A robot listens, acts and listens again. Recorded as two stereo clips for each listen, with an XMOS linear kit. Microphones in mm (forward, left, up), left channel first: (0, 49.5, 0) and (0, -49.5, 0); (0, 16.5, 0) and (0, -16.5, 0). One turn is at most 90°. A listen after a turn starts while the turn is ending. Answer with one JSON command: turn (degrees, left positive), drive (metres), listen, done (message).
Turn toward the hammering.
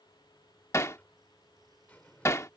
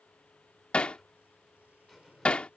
{"turn": 30}
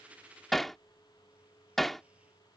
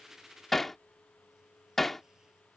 {"done": "Found it: hammering, straight ahead."}